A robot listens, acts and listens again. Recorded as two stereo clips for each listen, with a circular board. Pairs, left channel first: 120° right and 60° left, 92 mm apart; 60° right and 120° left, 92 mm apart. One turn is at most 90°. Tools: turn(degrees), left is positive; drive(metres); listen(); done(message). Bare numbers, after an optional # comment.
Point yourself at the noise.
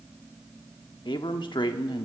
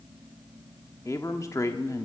# The man speaking: 110° right.
turn(-90)
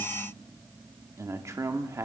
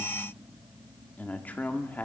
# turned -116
# The man speaking is now 10° left.
turn(10)
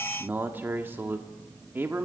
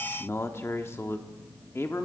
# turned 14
done("Facing the man speaking, 1 to 2 m away.")